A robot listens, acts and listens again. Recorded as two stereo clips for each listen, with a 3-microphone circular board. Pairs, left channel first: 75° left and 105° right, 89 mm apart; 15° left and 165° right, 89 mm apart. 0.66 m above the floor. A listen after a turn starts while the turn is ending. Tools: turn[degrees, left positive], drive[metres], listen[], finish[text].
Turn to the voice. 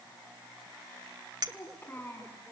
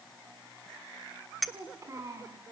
Thought: The child speaking: 140° left.
Action: turn[140]
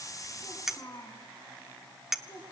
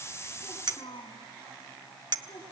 Thought: The child speaking is now 20° left.
Action: turn[20]
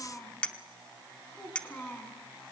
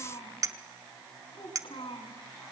Action: finish[Facing the child speaking, over 4 m away.]